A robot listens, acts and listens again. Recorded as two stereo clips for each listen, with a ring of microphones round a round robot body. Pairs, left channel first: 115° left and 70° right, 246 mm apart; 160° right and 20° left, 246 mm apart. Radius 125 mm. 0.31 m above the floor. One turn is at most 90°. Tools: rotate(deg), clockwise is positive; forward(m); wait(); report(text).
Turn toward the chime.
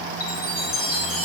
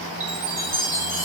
rotate(-60)
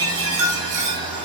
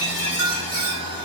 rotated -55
report("Found it: a chime, straight ahead.")